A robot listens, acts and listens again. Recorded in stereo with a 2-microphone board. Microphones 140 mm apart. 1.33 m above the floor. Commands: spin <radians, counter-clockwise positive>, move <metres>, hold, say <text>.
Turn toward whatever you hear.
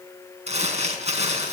spin -0.87
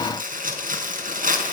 spin -1.40
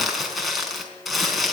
say Found it: crumpling, straight ahead.